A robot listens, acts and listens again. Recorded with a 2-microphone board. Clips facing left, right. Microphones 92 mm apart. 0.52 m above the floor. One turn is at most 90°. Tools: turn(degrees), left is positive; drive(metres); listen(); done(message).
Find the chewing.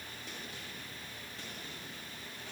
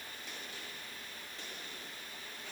listen()
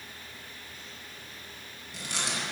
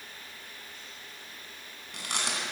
turn(degrees=-70)
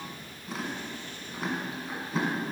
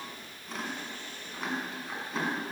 done("Facing the chewing.")